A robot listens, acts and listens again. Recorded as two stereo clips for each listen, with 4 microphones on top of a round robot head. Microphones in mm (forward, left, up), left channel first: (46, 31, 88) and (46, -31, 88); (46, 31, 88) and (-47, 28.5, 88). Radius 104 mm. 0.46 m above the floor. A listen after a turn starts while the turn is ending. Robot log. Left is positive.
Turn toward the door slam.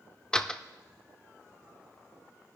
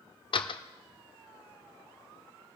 note: The door slam: 15° left.
cmd yaw +15
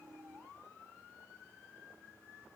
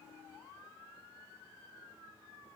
end: I heard a door slam from this way, but can't make it out now.